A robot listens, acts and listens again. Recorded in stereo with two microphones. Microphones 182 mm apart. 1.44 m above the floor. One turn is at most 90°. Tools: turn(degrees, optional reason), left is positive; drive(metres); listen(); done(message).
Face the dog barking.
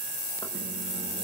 listen()
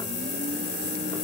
listen()
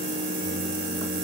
done("I can't make out a dog barking, only a microwave.")